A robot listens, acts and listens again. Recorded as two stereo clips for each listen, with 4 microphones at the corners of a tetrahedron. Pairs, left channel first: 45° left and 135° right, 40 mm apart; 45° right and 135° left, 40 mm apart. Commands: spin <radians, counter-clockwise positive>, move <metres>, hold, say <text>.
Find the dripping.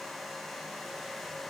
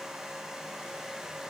hold
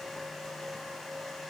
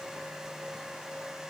hold
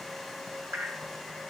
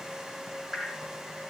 spin -2.62
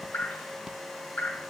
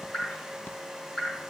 spin 0.35
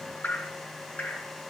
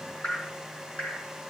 spin 0.17
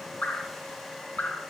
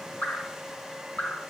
say Facing the dripping, over 4 m away.